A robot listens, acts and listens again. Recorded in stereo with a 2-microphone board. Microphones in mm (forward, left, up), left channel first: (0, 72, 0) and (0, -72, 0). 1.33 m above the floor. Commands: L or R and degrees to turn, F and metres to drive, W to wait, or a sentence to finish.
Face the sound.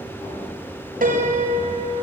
R90
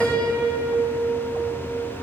Facing the piano, over 4 m away.